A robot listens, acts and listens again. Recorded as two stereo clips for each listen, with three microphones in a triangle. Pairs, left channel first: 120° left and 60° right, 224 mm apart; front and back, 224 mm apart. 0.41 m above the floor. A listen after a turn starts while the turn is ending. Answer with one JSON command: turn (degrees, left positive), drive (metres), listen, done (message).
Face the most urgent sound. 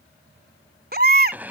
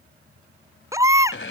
{"turn": -105}
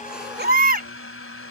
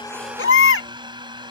{"turn": -15}
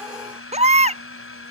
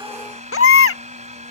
{"done": "Found it: a baby crying, straight ahead."}